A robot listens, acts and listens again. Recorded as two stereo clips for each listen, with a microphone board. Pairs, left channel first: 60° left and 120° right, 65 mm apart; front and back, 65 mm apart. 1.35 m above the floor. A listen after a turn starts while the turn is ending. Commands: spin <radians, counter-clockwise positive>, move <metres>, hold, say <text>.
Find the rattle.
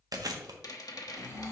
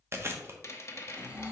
spin 0.79
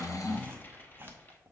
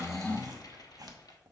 say Facing the rattle.